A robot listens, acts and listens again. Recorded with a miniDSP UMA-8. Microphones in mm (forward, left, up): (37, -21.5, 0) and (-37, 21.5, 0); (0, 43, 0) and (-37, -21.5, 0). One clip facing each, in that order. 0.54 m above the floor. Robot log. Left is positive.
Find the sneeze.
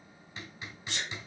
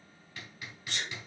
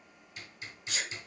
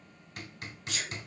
note: The sneeze: 35° left.
cmd yaw +35
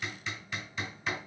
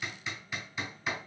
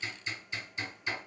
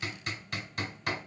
end: I heard a sneeze from this way, but can't make it out now.